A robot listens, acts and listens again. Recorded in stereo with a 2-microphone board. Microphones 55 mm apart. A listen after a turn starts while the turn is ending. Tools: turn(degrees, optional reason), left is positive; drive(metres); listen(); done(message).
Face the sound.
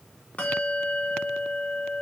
turn(degrees=25, reason="The bell: about 25° left or 155° left.")
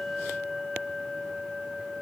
done("Found it: a bell, straight ahead, 1 to 2 m away.")